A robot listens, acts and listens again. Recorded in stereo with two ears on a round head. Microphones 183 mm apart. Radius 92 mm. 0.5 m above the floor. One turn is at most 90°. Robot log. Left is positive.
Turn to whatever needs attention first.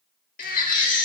note: The baby crying: about 40° left or 140° left.
cmd yaw +40
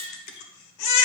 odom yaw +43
note: So it is at 90° left.
cmd yaw +90
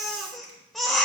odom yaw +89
end: Found it: a baby crying, straight ahead, 1 to 2 m away.